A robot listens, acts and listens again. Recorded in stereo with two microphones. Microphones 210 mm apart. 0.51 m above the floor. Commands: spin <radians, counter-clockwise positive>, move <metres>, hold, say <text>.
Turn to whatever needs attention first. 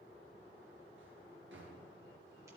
hold
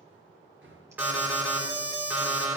spin -0.52
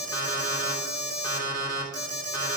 spin 0.35
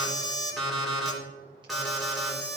say Found it: an alarm, straight ahead, 2 to 4 m away.